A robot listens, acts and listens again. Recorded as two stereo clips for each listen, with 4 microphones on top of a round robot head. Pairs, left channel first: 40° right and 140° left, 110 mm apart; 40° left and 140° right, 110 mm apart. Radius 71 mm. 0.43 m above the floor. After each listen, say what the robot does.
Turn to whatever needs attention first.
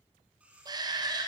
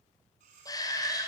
Turn 90° left.
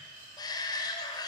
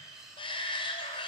Turn 10° left.
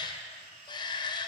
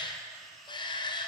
Found it: a shout, straight ahead, 1 to 2 m away.